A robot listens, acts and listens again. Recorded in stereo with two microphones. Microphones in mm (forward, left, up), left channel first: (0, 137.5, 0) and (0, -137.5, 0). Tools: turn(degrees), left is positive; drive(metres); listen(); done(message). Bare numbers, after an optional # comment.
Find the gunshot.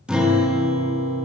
listen()
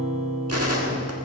# The gunshot: about 65° right or 115° right.
turn(-65)
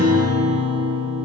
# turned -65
listen()
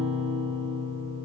done("I heard a gunshot, but can't make it out now. It was about straight ahead or 50° right.")